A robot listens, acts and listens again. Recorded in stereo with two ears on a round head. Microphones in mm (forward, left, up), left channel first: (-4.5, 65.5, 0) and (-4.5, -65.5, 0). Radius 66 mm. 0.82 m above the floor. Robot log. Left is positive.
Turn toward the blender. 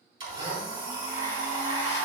note: The blender: about 30° right or 150° right.
cmd yaw -30
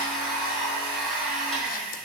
end: Found it: a blender, straight ahead, 2 to 4 m away.